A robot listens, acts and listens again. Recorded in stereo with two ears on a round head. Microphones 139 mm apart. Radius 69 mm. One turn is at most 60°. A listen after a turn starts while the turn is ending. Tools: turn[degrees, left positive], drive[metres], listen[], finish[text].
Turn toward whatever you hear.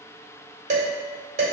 Thought: The dishes clattering: about 50° right or 130° right.
Action: turn[-50]
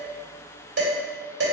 Thought: So it is at 80° right.
Action: turn[-60]
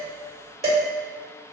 Thought: The dishes clattering is now 40° right.
Action: turn[-40]
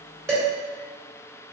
Thought: The dishes clattering is now 10° right.
Action: turn[-10]
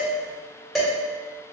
Action: finish[Found it: dishes clattering, straight ahead, 1 to 2 m away.]